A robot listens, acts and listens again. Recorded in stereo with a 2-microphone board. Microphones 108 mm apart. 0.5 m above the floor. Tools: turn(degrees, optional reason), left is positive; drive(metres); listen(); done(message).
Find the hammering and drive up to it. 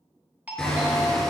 turn(degrees=30)
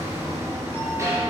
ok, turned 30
turn(degrees=-25, reason="So it is at 25° right.")
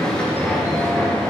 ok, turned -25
turn(degrees=10, reason="The hammering is now 10° left.")
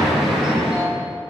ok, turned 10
drive(metres=1.0)
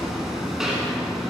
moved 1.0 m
drive(metres=1.0)
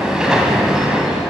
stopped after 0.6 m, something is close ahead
done("I am next to the hammering.")